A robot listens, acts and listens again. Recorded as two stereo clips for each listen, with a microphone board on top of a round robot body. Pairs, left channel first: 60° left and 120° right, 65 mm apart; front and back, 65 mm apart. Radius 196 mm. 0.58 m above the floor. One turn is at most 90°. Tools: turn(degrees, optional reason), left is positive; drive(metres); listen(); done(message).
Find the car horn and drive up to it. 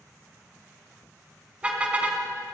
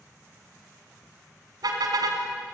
turn(degrees=90, reason="The car horn: 170° left.")
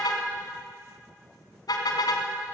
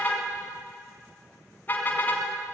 turn(degrees=60, reason="The car horn is now 60° left.")
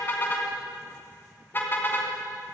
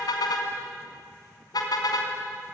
drive(metres=1.0)
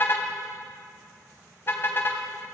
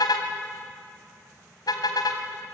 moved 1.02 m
drive(metres=1.0)
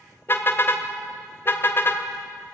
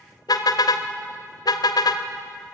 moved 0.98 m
drive(metres=1.0)
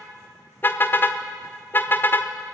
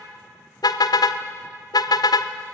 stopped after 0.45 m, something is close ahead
done("Arrived at the car horn, straight ahead.")